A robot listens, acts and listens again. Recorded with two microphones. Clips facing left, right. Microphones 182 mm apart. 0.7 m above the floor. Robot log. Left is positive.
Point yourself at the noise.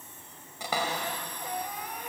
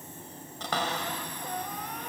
cmd yaw +30
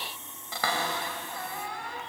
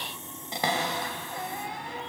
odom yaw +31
note: So it is at 20° right.
cmd yaw -20
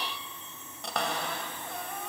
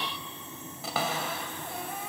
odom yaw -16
end: Found it: a cupboard door, straight ahead.